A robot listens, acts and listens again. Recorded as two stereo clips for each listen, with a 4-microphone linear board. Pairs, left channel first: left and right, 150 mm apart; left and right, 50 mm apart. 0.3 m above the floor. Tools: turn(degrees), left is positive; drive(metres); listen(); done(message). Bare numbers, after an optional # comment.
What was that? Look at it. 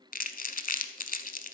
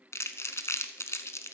# The crumpling: about 70° left or 110° left.
turn(70)
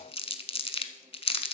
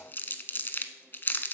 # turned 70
# So it is at 40° left.
turn(40)
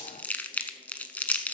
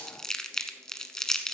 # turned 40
# The crumpling is now 10° left.
turn(10)
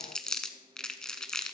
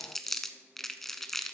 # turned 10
done("Found it: crumpling, straight ahead, under 1 m away.")